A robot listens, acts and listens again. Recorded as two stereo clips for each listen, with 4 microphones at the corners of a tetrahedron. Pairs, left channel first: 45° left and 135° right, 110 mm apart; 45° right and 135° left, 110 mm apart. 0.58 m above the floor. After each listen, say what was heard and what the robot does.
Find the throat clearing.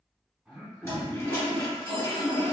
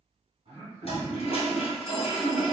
The throat clearing: 140° left. Turn 140° left.
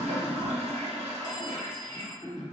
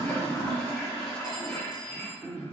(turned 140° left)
The throat clearing is now 40° left. Turn 40° left.
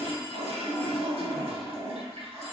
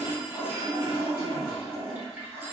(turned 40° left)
Keep listening.
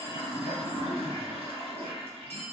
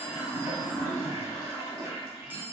Keep listening.
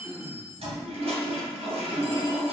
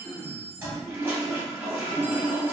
The throat clearing is now 10° left. Turn 10° left.
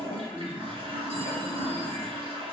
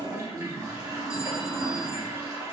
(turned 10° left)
Found it: throat clearing, straight ahead.